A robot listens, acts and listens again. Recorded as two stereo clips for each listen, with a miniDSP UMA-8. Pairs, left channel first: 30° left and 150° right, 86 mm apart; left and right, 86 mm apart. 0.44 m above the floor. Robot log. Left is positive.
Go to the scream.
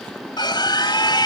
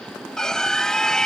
note: The scream: 10° left.
cmd yaw +10
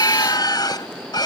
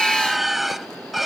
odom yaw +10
cmd fwd 1.0
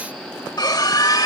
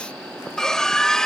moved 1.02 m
note: The scream is now 10° left.
cmd yaw +10
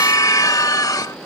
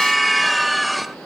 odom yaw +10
cmd fwd 1.0
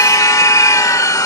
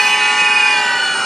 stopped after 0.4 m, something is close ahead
end: Arrived at the scream, straight ahead.